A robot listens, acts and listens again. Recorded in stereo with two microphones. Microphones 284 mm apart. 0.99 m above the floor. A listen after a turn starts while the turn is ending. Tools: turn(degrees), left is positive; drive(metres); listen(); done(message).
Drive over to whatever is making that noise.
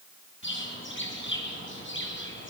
turn(degrees=40)
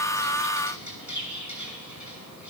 turn(degrees=95)
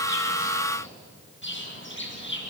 turn(degrees=40)
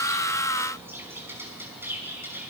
drive(metres=1.0)
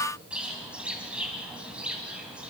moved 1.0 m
drive(metres=1.0)
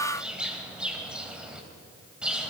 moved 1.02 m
drive(metres=1.0)
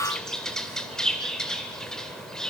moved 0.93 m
drive(metres=1.0)
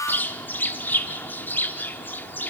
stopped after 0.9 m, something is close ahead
done("Arrived at the bird, straight ahead.")